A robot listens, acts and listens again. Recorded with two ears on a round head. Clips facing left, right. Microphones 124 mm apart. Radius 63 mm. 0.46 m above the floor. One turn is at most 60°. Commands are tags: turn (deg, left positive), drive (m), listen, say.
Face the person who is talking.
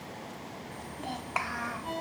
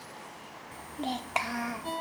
<turn deg="-30"/>
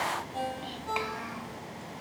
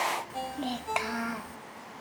<turn deg="-60"/>
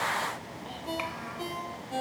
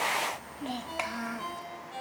<turn deg="-55"/>
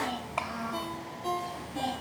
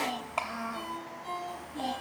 <say>Found it: a child speaking, straight ahead, under 1 m away.</say>